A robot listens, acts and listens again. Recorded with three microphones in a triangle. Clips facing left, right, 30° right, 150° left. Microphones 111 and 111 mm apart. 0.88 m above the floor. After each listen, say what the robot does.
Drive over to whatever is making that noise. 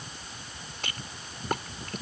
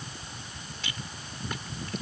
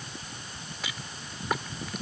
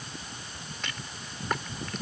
Turn 55° left.
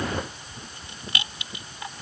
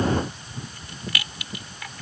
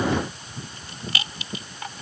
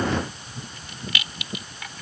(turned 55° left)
Turn 25° left.
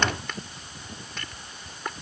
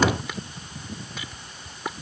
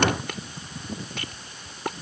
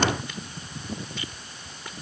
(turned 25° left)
Drive 1.0 m forward.
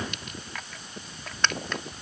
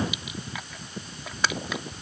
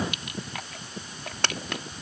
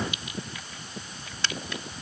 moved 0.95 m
Drive 1.0 m forward.
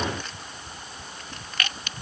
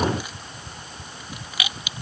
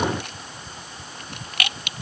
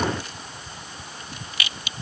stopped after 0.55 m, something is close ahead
Turn 10° right.
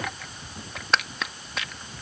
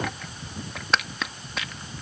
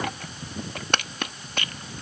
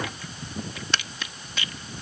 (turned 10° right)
I am next to the rattle.